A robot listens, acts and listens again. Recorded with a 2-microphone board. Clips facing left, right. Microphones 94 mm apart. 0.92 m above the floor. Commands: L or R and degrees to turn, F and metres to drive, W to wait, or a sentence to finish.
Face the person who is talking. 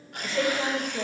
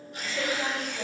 L55
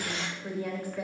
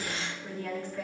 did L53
L10
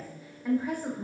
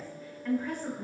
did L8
L15
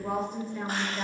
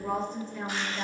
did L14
Found it: a woman speaking, straight ahead.